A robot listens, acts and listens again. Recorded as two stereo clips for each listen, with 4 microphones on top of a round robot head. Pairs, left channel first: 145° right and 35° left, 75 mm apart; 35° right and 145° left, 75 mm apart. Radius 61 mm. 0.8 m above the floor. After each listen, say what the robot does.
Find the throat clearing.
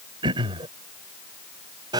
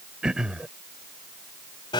Turn 60° left.
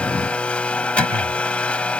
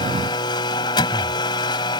Keep listening.
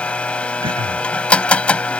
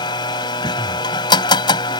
Keep listening.
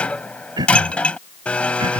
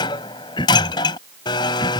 Found it: throat clearing, straight ahead.